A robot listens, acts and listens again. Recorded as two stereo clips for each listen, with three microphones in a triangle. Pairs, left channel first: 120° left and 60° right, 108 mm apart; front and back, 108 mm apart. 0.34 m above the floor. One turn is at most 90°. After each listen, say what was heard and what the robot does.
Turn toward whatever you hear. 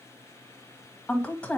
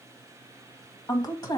The woman speaking: 40° left. Turn 40° left.
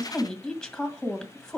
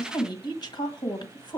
The woman speaking is now 35° left. Turn 35° left.
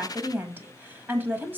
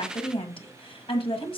The woman speaking is now 10° left. Turn 10° left.
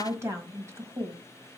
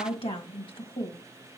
Facing the woman speaking, 1 to 2 m away.